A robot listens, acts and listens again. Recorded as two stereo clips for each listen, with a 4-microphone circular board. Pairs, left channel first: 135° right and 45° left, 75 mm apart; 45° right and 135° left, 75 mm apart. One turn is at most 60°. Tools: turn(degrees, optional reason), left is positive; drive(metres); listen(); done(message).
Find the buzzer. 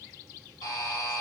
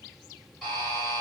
turn(degrees=-60, reason="The buzzer: 130° right.")
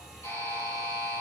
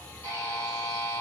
turn(degrees=-60, reason="The buzzer is now 95° right.")
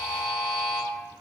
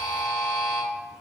turn(degrees=-30, reason="The buzzer is now 30° right.")
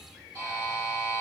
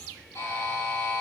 done("Facing the buzzer, 1 to 2 m away.")